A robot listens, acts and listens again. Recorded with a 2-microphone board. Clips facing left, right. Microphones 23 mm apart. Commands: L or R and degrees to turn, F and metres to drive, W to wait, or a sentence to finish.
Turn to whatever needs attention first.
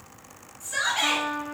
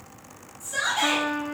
L40
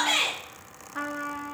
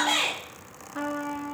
L95
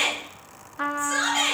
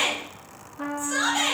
L35
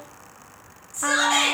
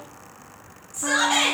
Found it: a shout, straight ahead.